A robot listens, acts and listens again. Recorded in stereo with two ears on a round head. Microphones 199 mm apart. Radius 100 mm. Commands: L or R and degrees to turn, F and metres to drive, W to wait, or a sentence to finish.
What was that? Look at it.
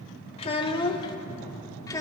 L30
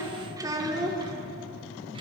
R20
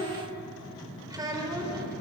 R20
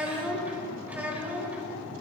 Found it: a child speaking, straight ahead.